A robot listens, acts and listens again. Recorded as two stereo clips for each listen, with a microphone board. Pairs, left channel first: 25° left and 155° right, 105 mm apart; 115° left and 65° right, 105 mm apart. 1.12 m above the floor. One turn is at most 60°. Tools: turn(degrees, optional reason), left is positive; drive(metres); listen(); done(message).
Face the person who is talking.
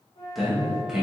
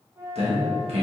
turn(degrees=-60, reason="The man speaking: 75° right.")
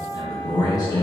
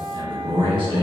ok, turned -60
turn(degrees=-35, reason="The man speaking is now 35° right.")
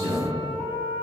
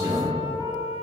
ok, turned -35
turn(degrees=-10, reason="The man speaking is now 10° right.")
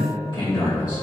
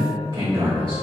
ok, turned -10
turn(degrees=-20, reason="The man speaking is now 20° right.")
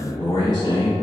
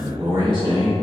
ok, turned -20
turn(degrees=-15, reason="The man speaking is now 15° right.")
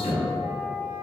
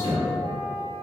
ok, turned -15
done("Found it: a man speaking, straight ahead.")